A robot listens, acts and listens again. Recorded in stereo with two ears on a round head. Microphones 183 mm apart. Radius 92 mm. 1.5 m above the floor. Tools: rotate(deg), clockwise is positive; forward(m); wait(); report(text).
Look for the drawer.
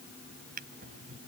rotate(45)
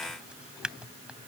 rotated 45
report("Facing the drawer.")